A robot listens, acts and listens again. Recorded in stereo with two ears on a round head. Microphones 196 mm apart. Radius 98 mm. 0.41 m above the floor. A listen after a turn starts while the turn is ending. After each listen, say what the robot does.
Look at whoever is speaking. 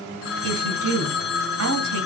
Turn 65° right.
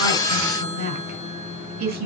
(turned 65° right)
Turn 45° right.
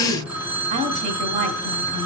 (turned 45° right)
Turn 35° right.
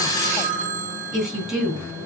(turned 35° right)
Facing the woman speaking.